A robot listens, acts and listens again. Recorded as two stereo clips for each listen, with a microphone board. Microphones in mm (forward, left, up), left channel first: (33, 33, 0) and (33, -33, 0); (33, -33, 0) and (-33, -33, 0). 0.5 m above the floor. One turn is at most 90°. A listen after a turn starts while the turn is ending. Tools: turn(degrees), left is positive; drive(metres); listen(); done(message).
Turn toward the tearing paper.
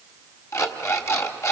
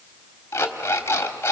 listen()
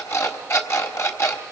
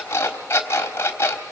listen()
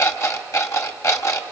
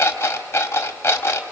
done("I can't make out tearing paper to turn to.")